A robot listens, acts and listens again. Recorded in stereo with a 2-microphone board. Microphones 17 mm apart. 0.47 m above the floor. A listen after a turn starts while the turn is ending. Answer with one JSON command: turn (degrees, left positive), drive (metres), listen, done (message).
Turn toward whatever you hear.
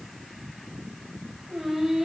{"turn": -55}
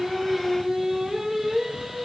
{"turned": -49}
{"turn": -25}
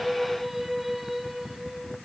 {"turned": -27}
{"turn": -10}
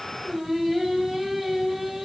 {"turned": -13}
{"done": "Found it: singing, straight ahead."}